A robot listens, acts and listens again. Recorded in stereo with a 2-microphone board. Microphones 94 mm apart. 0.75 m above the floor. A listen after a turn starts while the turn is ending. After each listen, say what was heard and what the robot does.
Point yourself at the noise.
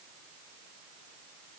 Keep listening.
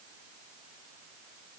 Keep listening.
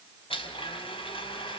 The blender: about 75° left or 105° left. Turn 75° left.
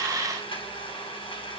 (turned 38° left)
So it is at 70° left. Turn 70° left.
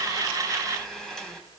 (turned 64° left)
Found it: a blender, straight ahead, over 4 m away.